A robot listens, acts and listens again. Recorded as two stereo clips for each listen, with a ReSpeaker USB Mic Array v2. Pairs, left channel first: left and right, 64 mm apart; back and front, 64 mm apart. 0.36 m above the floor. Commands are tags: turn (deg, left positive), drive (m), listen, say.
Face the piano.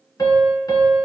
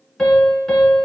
<turn deg="100"/>
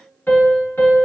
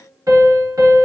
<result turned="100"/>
<turn deg="30"/>
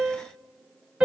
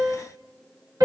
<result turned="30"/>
<turn deg="-15"/>
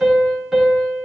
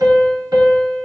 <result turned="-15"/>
<say>Facing the piano, 1 to 2 m away.</say>